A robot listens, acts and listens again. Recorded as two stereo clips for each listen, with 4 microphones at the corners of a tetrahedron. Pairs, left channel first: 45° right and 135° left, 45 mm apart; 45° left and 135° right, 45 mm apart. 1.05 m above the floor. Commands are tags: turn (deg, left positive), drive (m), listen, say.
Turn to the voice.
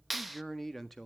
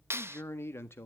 <turn deg="40"/>
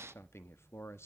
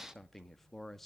<turn deg="-35"/>
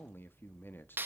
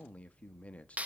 <turn deg="-10"/>
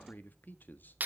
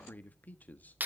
<say>Facing the man speaking.</say>